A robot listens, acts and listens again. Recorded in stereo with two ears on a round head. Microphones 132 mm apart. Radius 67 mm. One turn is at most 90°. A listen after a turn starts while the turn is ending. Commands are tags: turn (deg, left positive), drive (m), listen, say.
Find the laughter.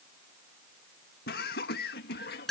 <turn deg="90"/>
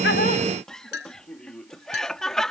<say>Found it: laughter, straight ahead.</say>